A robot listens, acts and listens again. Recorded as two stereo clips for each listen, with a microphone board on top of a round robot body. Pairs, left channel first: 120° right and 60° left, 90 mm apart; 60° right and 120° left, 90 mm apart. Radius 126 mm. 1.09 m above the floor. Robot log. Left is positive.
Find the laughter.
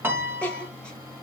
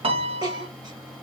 note: The laughter: 165° left.
cmd yaw +165
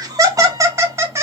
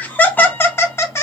end: Facing the laughter.